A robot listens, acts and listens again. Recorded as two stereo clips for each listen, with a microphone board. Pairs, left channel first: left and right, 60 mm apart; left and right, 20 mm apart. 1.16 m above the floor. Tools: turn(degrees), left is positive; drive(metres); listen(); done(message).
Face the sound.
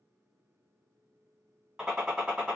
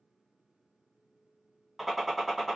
turn(degrees=-30)
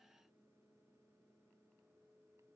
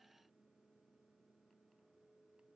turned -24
listen()
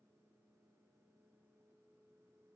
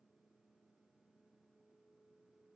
done("I heard a gunshot, but can't make it out now. It was about 10° left or 145° right.")